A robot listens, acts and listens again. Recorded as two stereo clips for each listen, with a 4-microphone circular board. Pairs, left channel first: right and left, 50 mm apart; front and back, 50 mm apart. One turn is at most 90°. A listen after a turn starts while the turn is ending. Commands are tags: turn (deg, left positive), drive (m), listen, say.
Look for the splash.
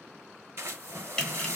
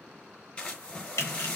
<turn deg="65"/>
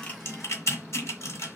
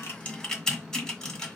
<say>Facing where the splash came from. I can't hear it now.</say>